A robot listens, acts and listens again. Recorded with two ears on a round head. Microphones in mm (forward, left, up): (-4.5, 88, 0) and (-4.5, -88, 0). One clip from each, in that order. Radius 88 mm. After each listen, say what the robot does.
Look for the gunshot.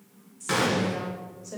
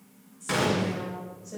Turn 30° left.
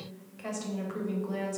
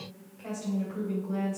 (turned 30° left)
Keep listening.
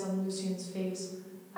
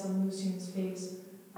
I heard a gunshot, but can't make it out now. It was about 25° right or 145° left.